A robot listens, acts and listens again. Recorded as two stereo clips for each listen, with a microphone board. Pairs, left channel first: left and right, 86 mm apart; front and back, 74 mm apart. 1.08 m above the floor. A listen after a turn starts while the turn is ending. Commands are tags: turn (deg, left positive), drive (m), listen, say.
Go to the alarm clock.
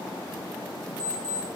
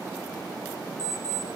<turn deg="-45"/>
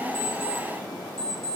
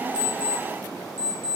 <drive m="1.0"/>
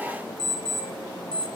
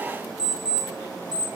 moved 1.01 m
<turn deg="10"/>
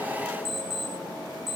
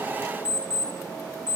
<drive m="1.0"/>
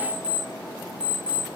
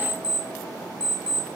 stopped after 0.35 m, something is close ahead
<turn deg="-15"/>
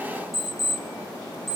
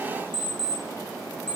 <say>Arrived at the alarm clock, straight ahead.</say>